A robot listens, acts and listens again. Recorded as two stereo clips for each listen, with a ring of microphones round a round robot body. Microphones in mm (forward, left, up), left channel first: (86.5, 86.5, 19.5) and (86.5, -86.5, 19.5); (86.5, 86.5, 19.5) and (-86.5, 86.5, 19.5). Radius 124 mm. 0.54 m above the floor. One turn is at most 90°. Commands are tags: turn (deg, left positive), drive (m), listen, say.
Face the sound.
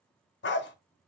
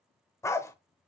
<turn deg="75"/>
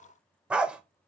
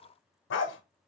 <say>Found it: a dog barking, straight ahead, under 1 m away.</say>